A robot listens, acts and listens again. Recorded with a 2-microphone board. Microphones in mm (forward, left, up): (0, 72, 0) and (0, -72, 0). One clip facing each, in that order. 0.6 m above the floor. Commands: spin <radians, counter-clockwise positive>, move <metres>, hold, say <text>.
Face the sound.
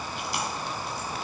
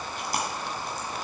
spin -0.79
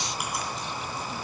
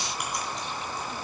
hold
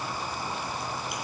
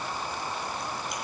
hold
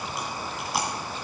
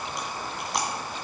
say Found it: chewing, straight ahead.